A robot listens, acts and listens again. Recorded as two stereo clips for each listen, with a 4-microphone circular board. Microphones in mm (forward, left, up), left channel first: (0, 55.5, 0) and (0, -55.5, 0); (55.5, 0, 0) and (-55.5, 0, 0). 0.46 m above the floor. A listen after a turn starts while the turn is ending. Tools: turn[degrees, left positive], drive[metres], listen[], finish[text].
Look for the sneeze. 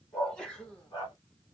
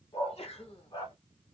Thought: The sneeze: 10° left.
Action: turn[10]
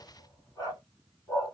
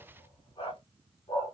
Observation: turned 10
Action: finish[Facing where the sneeze came from. I can't hear it now.]